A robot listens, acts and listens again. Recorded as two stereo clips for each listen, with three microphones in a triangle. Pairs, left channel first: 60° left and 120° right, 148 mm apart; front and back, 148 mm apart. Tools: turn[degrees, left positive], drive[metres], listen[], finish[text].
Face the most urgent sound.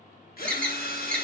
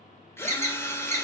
Thought: The alarm: 140° left.
Action: turn[140]
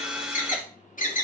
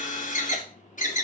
Thought: The alarm is now 30° left.
Action: turn[30]
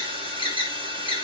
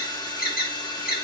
Action: finish[Facing the alarm, 1 to 2 m away.]